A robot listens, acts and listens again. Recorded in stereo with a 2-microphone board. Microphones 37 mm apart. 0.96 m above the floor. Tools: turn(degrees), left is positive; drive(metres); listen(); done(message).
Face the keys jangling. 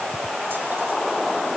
listen()
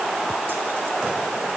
listen()
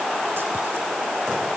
done("I can't make out keys jangling to turn to.")